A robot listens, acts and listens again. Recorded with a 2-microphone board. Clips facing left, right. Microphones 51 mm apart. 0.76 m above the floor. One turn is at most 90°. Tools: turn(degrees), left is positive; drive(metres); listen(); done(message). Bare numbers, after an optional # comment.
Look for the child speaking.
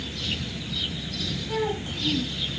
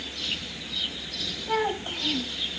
# The child speaking: about 45° right or 135° right.
turn(-45)
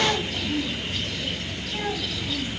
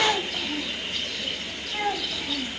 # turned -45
# So it is at 20° right.
turn(-20)
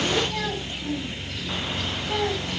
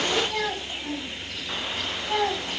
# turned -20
# The child speaking is now 20° right.
turn(-20)
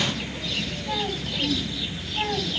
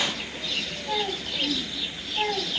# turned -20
done("Facing the child speaking.")